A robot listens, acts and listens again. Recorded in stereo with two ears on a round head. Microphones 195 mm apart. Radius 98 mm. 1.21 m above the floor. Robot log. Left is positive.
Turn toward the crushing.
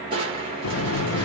note: The crushing: about 25° right or 155° right.
cmd yaw -25
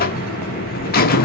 cmd idle
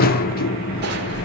cmd idle
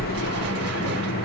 end: I heard crushing, but can't make it out now. It was about straight ahead or 130° right.